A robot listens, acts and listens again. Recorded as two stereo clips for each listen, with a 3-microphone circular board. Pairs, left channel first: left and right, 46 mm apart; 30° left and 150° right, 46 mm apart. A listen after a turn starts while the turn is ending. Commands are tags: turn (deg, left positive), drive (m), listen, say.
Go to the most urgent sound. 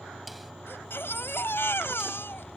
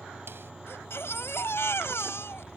<turn deg="55"/>
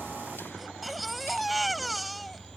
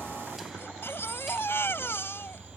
<drive m="1.0"/>
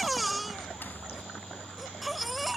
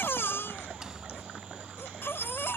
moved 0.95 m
<drive m="1.0"/>
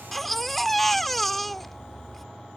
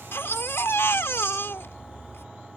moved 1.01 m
<drive m="1.0"/>
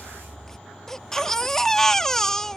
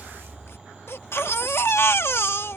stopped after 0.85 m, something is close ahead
<turn deg="10"/>
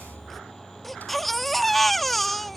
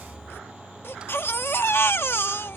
<say>I am next to the baby crying.</say>